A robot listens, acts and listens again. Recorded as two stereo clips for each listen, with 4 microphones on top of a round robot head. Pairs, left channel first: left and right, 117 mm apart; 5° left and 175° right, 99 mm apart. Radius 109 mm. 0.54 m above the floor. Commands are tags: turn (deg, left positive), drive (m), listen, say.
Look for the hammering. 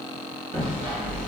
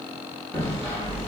<turn deg="-75"/>
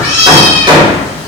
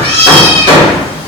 <turn deg="-35"/>
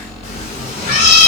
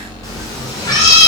<listen/>
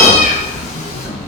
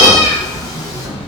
<listen/>
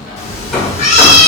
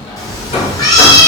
<say>Found it: hammering, straight ahead.</say>